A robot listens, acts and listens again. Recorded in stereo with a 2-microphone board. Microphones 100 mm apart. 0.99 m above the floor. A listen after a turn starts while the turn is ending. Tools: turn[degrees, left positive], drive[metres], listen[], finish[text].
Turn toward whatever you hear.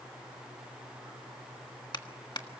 Thought: The clap: about 50° left or 130° left.
Action: turn[50]
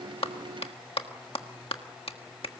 Thought: So it is at 80° left.
Action: turn[80]
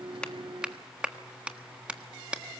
Thought: The clap is now 10° right.
Action: turn[-10]
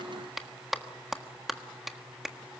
Action: finish[Found it: a clap, straight ahead.]